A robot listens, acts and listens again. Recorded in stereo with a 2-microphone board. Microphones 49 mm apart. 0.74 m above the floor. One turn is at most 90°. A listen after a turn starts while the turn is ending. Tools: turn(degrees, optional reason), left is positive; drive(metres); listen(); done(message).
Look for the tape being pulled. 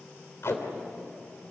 turn(degrees=60, reason="The tape being pulled: about 60° left or 120° left.")
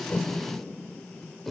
done("Facing the tape being pulled, 2 to 4 m away.")